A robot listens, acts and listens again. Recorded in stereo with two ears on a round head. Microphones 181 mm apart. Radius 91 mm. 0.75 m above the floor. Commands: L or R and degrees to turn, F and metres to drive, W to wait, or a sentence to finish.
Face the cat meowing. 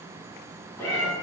L30
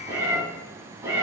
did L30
R15
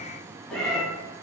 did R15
Found it: a cat meowing, straight ahead, 2 to 4 m away.